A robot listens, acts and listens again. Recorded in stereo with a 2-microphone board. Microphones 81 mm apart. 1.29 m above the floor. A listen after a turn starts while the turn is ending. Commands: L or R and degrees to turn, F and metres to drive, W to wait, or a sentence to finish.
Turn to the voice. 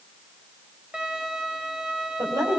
R50
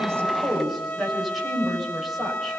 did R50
Facing the woman speaking, over 4 m away.